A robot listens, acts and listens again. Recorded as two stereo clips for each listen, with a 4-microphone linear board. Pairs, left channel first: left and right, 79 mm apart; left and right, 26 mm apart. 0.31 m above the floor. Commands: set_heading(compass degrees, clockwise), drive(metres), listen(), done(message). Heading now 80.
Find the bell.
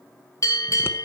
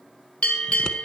set_heading(40)
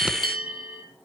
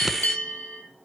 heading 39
set_heading(299)
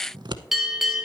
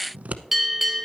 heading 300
done("Found it: a bell, straight ahead.")